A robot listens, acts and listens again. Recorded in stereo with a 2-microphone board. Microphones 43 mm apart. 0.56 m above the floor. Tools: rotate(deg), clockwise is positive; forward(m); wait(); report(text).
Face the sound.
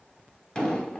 rotate(-20)
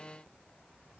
wait()
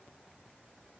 report("I heard an explosion, but can't make it out now. It was about straight ahead or 140° left.")